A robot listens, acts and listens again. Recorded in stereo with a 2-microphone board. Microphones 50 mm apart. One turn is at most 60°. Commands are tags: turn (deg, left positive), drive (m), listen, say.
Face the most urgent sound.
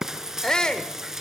<turn deg="30"/>
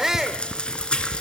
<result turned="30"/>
<turn deg="-15"/>
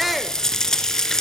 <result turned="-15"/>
<say>Found it: a shout, straight ahead, 1 to 2 m away.</say>